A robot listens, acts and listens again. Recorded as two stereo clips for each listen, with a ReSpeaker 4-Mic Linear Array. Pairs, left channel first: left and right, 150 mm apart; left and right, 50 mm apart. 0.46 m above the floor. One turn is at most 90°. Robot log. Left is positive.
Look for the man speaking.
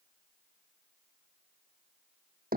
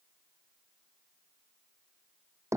cmd idle
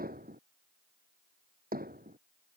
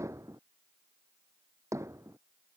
cmd idle
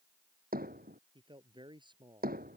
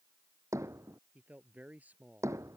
note: The man speaking: about 30° right or 150° right.
cmd yaw -30
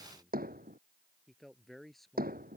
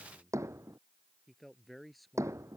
end: Facing the man speaking.